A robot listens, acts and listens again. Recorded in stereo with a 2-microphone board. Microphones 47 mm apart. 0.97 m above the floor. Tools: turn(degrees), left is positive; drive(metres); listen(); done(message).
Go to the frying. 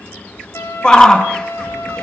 listen()
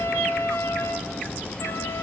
listen()
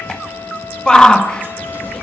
done("I can't make out frying, only a trumpet and a shout.")